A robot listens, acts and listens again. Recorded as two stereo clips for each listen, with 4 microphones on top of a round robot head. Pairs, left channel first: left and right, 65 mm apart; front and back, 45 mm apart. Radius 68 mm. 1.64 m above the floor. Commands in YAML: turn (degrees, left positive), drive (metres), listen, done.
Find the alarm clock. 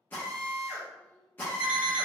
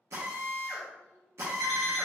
turn: -135
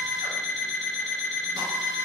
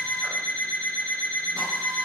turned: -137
done: "Found it: an alarm clock, straight ahead."